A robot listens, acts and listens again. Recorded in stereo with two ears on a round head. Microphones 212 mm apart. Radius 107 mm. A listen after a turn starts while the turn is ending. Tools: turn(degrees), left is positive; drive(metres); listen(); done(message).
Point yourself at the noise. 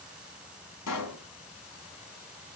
turn(degrees=90)
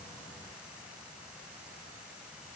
done("Facing where the pop came from. I can't hear it now.")